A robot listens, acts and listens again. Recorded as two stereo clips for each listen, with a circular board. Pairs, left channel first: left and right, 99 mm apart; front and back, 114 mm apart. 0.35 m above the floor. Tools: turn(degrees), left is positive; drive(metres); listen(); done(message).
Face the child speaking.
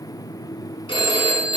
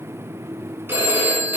listen()
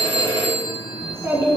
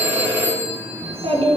turn(degrees=-150)
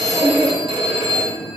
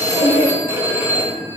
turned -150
done("Facing the child speaking.")